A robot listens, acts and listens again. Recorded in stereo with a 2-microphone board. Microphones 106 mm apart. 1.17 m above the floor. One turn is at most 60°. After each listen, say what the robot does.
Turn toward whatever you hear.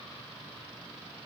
Keep listening.
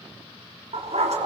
Turn 60° right.
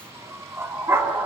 Turn 25° right.
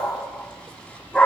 Turn 10° left.
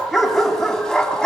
Facing the dog barking, 2 to 4 m away.